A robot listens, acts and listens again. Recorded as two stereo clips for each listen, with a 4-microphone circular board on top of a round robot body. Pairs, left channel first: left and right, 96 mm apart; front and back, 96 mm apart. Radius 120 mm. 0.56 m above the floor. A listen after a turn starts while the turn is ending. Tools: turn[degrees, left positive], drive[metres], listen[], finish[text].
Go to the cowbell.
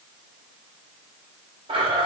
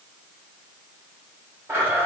Action: listen[]
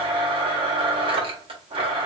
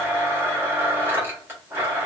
Action: listen[]
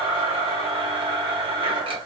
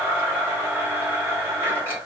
Action: finish[I can't make out a cowbell, only a blender.]